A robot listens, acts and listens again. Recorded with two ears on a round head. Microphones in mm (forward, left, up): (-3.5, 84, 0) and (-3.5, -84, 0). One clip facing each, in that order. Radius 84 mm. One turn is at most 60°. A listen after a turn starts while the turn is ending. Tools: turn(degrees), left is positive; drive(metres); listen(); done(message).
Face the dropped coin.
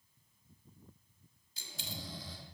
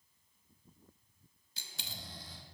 turn(degrees=-55)
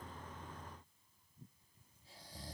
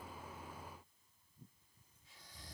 listen()
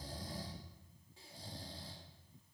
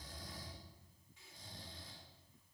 done("I heard a dropped coin, but can't make it out now. It was about straight ahead or 70° right.")